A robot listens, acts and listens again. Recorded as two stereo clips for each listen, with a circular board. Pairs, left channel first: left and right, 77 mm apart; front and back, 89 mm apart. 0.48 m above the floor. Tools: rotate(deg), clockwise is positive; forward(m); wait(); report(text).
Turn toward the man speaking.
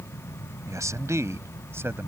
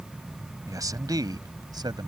rotate(150)
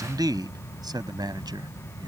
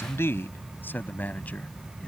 rotate(70)
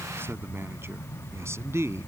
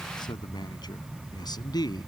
rotate(35)
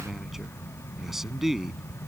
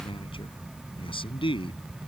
report("Found it: a man speaking, straight ahead.")